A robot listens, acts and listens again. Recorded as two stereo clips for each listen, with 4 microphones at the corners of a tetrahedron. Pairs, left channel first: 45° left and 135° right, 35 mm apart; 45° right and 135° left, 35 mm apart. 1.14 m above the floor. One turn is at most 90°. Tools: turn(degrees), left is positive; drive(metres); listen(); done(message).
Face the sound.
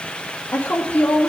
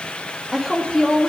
turn(degrees=45)
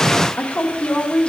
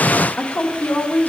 turn(degrees=-15)
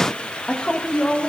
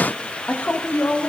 turn(degrees=-25)
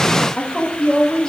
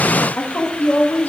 turn(degrees=-30)
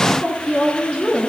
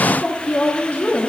turn(degrees=-10)
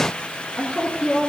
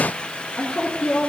done("Facing the woman speaking, 1 to 2 m away.")